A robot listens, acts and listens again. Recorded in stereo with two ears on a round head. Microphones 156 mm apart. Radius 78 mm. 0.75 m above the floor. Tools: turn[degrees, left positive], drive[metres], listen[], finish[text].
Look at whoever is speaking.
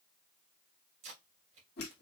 Action: listen[]
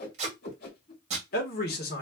Thought: The man speaking: about 55° left or 125° left.
Action: turn[55]
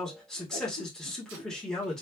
Action: finish[Found it: a man speaking, straight ahead.]